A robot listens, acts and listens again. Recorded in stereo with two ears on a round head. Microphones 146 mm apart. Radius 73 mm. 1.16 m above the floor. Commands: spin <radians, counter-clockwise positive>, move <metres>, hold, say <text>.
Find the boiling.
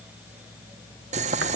spin -0.79
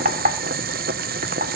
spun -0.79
spin -1.48
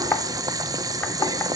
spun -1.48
spin -0.44
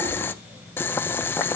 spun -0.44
spin 0.26
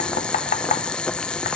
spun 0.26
say Found it: boiling, straight ahead, under 1 m away.